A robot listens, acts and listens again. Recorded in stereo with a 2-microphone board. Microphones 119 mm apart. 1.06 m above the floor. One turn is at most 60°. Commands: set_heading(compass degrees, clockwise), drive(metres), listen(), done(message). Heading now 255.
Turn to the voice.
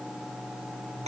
listen()
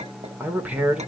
set_heading(285)
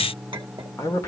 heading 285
set_heading(260)
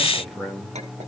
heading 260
done("Facing the man speaking, 2 to 4 m away.")